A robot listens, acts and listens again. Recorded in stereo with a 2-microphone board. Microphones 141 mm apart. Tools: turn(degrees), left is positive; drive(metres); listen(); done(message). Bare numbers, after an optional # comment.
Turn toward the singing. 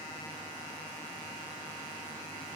listen()
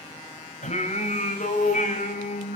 # The singing: about 65° left or 115° left.
turn(65)
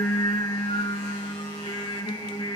# So it is at 30° left.
turn(30)
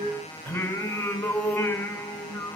# The singing is now 10° left.
turn(10)
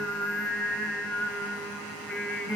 done("Facing the singing, 2 to 4 m away.")